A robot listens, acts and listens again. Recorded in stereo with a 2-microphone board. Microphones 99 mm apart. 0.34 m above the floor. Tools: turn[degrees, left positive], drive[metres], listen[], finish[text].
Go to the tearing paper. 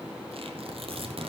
Thought: The tearing paper: about 60° right or 120° right.
Action: turn[-60]
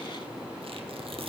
Thought: So it is at 60° right.
Action: turn[-60]
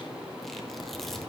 Action: drive[1.0]
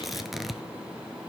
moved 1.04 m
Action: drive[1.0]
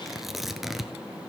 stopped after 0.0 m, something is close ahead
Action: finish[I am next to the tearing paper.]